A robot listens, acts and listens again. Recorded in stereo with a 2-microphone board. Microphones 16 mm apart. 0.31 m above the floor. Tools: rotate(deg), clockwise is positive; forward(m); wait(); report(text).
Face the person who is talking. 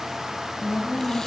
rotate(-60)
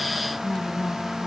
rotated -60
rotate(-50)
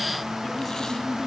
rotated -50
rotate(-10)
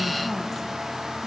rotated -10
wait()
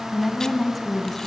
report("Found it: a woman speaking, straight ahead.")